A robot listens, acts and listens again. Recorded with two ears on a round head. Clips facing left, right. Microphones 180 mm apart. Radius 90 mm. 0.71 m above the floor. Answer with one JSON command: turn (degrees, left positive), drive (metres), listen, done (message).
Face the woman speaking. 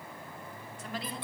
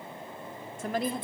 {"turn": -40}
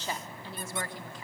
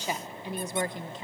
{"turn": -20}
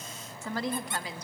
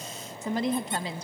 {"turn": -25}
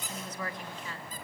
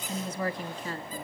{"turn": -35}
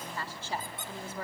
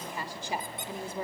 {"turn": -15}
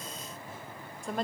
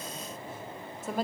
{"done": "Facing the woman speaking, 1 to 2 m away."}